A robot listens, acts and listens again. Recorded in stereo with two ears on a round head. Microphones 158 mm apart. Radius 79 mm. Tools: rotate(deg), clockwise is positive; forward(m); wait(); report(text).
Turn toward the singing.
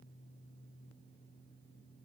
wait()
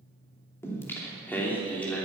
rotate(-30)
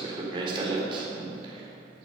rotate(30)
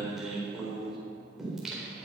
report("Facing the singing, over 4 m away.")